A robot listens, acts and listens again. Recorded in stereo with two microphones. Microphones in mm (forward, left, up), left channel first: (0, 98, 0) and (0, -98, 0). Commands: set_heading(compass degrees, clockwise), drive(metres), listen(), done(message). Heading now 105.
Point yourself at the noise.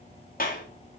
set_heading(55)
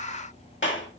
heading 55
set_heading(335)
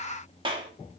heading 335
set_heading(0)
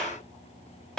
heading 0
done("Facing the clap.")